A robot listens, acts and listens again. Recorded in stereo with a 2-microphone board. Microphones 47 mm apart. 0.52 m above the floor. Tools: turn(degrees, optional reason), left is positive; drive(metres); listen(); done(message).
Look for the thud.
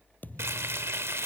turn(degrees=35, reason="The thud: about 35° left or 145° left.")
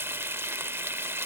listen()
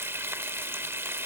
done("I heard a thud, but can't make it out now. It was about straight ahead or 110° left.")